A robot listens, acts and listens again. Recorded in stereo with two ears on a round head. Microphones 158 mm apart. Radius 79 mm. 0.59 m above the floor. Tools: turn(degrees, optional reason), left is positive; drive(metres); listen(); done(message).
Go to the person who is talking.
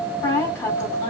turn(degrees=15, reason="The woman speaking: about 15° left or 165° left.")
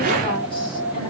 listen()
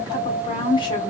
turn(degrees=150, reason="So it is at 150° left.")
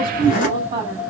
turn(degrees=-35, reason="The woman speaking is now 35° right.")
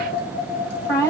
turn(degrees=20, reason="The woman speaking is now 20° left.")
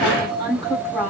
drive(metres=1.0)
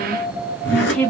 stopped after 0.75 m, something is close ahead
done("Arrived at the woman speaking, straight ahead.")